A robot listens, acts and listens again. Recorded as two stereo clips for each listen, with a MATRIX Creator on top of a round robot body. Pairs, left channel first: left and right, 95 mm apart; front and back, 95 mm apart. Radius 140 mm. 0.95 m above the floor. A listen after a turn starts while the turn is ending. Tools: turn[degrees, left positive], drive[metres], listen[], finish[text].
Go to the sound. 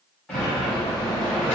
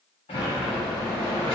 Thought: The sliding door: 15° left.
Action: turn[15]
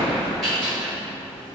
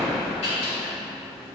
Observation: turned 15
Action: drive[1.0]
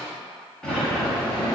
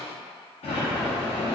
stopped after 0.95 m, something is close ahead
Action: finish[Arrived at the sliding door, straight ahead.]